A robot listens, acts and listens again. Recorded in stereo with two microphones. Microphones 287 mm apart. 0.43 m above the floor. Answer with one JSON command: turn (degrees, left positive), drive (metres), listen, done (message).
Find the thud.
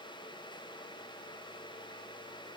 {"listen": true}
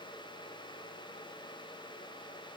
{"listen": true}
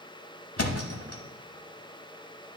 {"turn": 55}
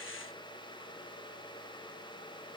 {"listen": true}
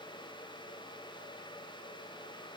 {"done": "I heard a thud, but can't make it out now. It was about straight ahead or 70° left."}